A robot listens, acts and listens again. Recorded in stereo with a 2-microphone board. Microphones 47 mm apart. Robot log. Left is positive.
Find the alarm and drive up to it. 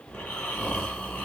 cmd idle
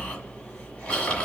cmd idle
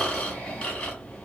end: I can't make out an alarm to turn to.